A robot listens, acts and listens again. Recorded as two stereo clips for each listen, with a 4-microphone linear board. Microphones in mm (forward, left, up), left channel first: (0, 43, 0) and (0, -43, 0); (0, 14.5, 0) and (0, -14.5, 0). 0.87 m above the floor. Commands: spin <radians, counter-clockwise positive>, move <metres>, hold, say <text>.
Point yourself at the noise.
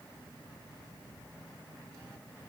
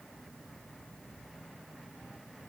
hold
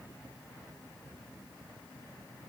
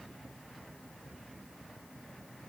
hold
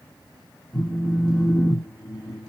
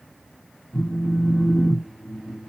spin 0.52
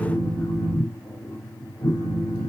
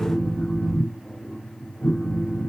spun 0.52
spin 2.53
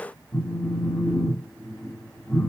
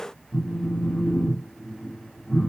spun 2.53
spin 0.26
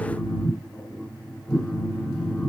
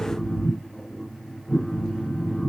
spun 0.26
say Found it: a phone buzzing, straight ahead.